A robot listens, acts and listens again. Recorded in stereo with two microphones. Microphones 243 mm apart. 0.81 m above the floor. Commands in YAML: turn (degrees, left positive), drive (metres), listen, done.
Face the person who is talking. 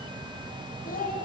turn: 35
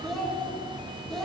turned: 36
done: "Found it: a child speaking, straight ahead, 1 to 2 m away."